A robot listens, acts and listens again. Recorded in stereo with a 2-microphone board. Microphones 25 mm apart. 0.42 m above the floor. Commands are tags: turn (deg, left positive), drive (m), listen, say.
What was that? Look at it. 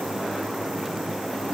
<listen/>
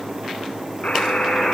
<turn deg="90"/>
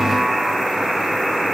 <say>Found it: a buzzer, straight ahead.</say>